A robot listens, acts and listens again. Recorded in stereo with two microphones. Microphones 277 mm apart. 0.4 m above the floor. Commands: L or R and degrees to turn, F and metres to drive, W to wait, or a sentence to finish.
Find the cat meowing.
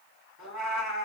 L90
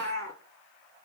L10
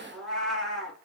Found it: a cat meowing, straight ahead.